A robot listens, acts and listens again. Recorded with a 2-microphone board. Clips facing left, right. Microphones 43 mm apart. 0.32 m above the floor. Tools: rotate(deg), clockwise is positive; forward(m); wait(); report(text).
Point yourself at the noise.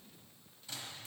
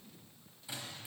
rotate(30)
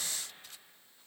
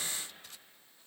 wait()
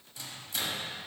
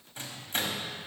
rotate(130)
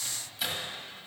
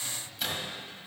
report("Found it: a microwave, straight ahead.")